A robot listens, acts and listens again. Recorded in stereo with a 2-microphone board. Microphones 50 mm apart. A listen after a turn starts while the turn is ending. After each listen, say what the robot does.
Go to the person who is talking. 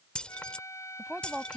Turn 30° right.
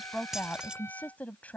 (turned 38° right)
Turn 30° left.
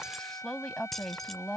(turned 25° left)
Drive 1.0 m forward.
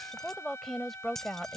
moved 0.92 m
Drive 1.0 m forward.
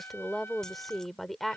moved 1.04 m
Drive 1.0 m forward.
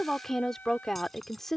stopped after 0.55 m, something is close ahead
Turn 10° left.
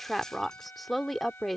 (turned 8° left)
Arrived at the woman speaking, straight ahead.